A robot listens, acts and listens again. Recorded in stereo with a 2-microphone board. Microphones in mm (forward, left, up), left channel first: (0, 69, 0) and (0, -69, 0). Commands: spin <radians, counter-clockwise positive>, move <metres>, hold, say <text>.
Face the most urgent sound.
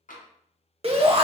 spin -0.79
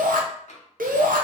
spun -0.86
spin -1.48
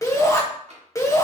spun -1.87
spin 0.44
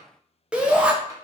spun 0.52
spin -0.17
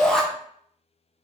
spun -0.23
say Found it: a shout, straight ahead, under 1 m away.